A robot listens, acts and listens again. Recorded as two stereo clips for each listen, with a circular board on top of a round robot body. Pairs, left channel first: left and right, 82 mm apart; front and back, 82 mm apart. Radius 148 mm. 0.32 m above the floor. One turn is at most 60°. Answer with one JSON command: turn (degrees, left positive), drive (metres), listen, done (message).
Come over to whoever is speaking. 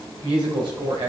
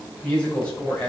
{"turn": -60}
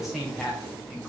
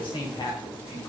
{"drive": 1.0}
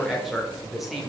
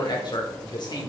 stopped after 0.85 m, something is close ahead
{"done": "I am next to the woman speaking."}